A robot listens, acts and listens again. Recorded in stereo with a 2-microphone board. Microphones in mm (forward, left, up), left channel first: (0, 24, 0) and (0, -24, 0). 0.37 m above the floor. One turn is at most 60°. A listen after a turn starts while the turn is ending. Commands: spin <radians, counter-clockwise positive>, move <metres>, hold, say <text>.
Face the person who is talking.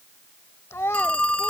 spin 1.05
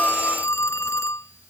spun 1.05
hold
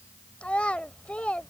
spin 0.52
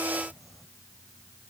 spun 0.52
hold
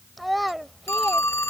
say Facing the child speaking.